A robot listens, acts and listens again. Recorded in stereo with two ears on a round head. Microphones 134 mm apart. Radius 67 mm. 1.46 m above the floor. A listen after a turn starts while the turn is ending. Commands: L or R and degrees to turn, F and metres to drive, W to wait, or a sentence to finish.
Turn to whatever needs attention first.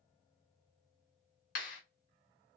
W
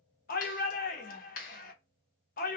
L65
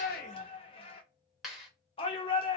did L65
L40
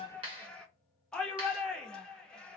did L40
Facing the shout, under 1 m away.